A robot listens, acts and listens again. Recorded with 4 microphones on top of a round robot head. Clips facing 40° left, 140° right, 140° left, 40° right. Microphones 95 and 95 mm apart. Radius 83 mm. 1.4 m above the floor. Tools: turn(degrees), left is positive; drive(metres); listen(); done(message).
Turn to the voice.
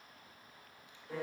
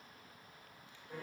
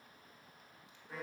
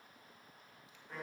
listen()
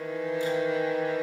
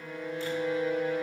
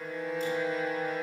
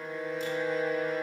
listen()
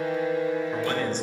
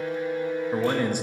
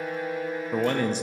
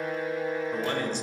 turn(degrees=135)
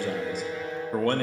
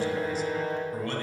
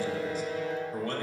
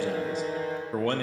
done("Facing the man speaking, under 1 m away.")